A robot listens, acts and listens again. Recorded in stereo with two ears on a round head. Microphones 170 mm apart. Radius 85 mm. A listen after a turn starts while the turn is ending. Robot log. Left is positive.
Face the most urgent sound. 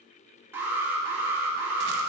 cmd yaw -30
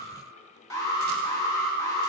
note: So it is at 15° left.
cmd yaw +15
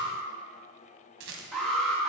end: Found it: an alarm, straight ahead.